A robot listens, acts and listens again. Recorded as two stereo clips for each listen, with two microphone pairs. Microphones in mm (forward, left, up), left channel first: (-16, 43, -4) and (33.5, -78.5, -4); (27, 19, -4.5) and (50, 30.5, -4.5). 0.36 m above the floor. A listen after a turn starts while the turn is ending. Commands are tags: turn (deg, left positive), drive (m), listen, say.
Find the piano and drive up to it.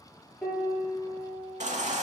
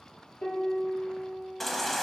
<turn deg="-165"/>
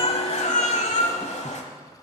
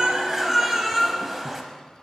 <turn deg="10"/>
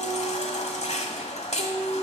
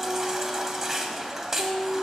<drive m="1.0"/>
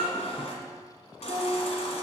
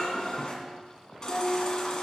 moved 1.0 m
<drive m="1.0"/>
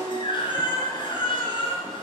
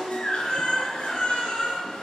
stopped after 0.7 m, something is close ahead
<turn deg="10"/>
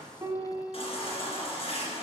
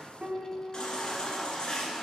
<say>Arrived at the piano, straight ahead.</say>